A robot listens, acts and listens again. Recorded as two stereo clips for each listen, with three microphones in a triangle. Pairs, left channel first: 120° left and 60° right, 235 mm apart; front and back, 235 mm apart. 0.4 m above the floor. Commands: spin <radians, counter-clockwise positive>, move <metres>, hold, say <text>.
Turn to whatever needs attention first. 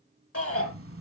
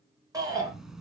spin 1.83
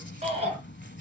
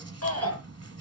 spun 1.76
say Facing the shout.